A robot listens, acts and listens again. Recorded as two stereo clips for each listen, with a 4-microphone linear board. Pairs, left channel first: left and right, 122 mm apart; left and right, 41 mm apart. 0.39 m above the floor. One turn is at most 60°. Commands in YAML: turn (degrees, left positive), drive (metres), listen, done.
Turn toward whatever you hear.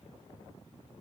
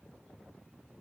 listen: true
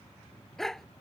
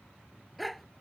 turn: 30
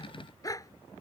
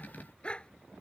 turn: 60
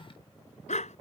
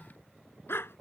turn: 60
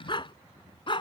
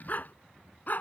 turn: 45
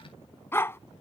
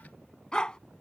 turn: 20
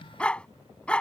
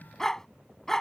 turn: 10
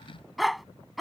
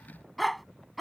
done: "Facing the dog barking."